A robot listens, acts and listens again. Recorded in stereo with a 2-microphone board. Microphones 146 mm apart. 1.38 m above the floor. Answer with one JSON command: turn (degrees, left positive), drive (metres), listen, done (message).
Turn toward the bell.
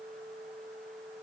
{"listen": true}
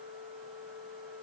{"listen": true}
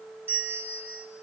{"turn": -30}
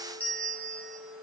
{"turn": 10}
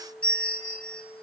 {"turn": 10}
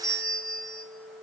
{"done": "Found it: a bell, straight ahead, over 4 m away."}